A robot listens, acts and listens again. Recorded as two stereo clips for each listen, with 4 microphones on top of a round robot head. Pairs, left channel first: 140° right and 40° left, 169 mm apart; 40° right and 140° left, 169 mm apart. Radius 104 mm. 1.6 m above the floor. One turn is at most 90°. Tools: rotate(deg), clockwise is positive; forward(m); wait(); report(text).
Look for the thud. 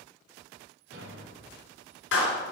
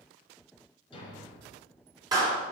rotate(-20)
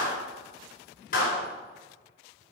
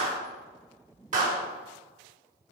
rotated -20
report("Facing where the thud came from. I can't hear it now.")